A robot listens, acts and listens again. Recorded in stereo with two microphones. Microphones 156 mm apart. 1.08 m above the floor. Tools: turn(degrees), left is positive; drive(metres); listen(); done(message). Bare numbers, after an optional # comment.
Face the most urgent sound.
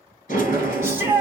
turn(-30)
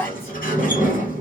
# So it is at 15° left.
turn(15)
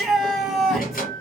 done("Found it: a shout, straight ahead.")